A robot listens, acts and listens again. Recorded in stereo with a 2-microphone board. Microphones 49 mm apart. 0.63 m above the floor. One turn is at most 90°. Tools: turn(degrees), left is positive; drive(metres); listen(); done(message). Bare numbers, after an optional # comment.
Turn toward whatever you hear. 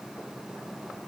listen()
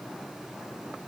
listen()
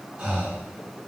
# The breathing: about 35° right or 145° right.
turn(-35)
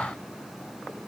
listen()
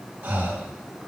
# So it is at 100° right.
turn(-90)
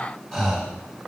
done("Facing the breathing.")